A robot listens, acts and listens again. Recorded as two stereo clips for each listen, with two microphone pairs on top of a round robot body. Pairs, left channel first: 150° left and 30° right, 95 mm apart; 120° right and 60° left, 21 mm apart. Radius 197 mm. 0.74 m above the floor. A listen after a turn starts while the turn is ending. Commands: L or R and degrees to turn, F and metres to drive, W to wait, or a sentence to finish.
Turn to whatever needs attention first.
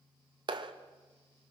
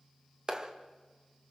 W
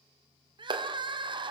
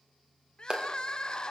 R70
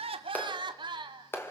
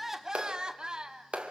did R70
Found it: crying, straight ahead, 1 to 2 m away.